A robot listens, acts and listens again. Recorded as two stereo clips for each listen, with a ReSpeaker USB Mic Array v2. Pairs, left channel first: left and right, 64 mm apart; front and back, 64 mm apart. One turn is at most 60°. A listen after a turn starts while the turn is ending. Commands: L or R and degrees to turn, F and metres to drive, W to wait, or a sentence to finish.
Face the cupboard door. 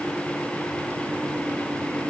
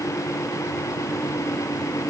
W
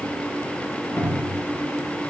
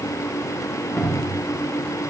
L60
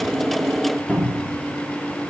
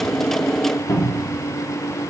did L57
L25
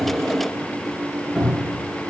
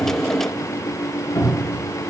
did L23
Facing the cupboard door, under 1 m away.